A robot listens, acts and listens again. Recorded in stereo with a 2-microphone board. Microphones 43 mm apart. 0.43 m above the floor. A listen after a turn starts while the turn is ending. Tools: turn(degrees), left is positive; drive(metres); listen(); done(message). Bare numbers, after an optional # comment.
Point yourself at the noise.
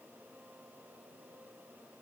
listen()
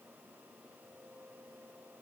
listen()
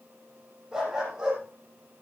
turn(-30)
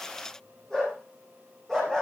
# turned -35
# So it is at 15° left.
turn(15)
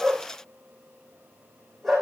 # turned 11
done("Found it: a dog barking, straight ahead, over 4 m away.")